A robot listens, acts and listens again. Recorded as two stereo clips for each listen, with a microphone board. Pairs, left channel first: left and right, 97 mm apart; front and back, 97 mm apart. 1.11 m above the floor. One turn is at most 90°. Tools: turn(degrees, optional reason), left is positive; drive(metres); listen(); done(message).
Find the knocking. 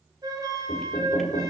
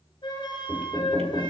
turn(degrees=90, reason="The knocking: 90° left.")
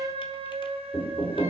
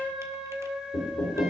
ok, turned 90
turn(degrees=30, reason="The knocking is now 30° left.")
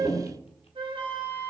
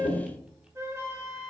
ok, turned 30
turn(degrees=10, reason="The knocking is now 10° left.")
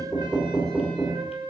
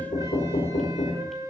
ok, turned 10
done("Facing the knocking.")